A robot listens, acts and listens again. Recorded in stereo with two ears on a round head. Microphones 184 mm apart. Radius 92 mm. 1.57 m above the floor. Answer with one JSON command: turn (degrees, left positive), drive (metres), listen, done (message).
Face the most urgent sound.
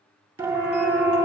{"turn": -30}
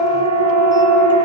{"turn": -140}
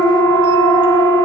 {"turn": -25}
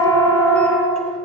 {"turn": 15}
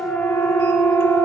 {"done": "Facing the siren, over 4 m away."}